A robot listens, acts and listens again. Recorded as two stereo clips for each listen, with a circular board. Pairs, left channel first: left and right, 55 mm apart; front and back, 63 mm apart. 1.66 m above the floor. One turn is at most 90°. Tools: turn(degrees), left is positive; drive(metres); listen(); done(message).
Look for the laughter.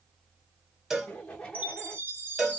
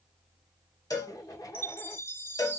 turn(degrees=20)
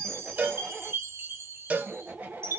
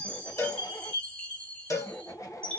turn(degrees=-35)
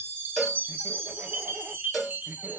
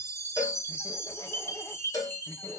listen()
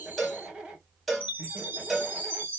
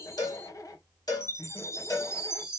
turn(degrees=-25)
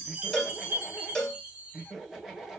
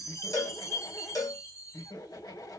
turn(degrees=-10)
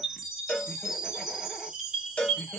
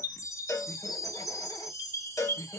listen()
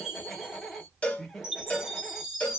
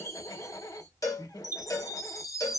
done("Facing the laughter.")